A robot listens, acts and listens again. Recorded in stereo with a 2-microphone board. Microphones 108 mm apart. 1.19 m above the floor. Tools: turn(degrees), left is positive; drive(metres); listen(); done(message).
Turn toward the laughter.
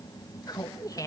turn(degrees=30)
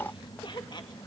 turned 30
turn(degrees=45)
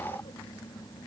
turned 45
listen()
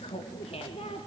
turn(degrees=110)
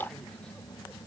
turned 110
listen()
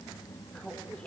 turn(degrees=10)
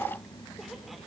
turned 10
listen()
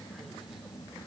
listen()
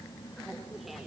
done("I heard laughter from this way, but can't make it out now.")